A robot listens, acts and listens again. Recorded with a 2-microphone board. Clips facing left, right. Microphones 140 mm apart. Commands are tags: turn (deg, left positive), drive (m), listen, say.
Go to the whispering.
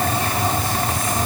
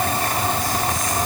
<listen/>
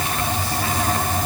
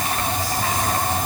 <listen/>
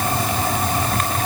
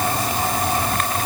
<say>I can't make out whispering to turn to.</say>